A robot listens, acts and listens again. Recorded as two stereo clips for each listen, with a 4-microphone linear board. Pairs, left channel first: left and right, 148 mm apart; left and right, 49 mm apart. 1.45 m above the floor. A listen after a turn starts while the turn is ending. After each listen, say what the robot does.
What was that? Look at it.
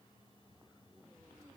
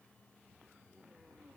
Keep listening.
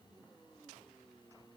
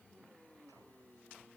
Keep listening.
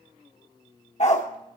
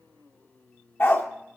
Turn 55° left.
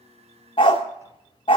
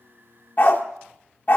Turn 50° left.
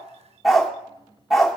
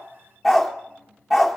Facing the dog barking.